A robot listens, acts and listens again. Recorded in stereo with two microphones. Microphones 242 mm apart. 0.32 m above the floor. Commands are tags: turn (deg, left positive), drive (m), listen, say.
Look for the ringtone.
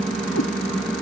<listen/>
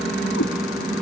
<listen/>
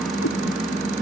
<say>I can't make out a ringtone.</say>